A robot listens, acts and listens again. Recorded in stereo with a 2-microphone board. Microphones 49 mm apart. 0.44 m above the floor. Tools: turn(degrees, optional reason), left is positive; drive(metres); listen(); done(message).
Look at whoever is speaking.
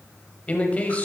turn(degrees=30, reason="The man speaking: about 30° left or 150° left.")
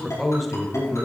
done("Found it: a man speaking, straight ahead, 2 to 4 m away.")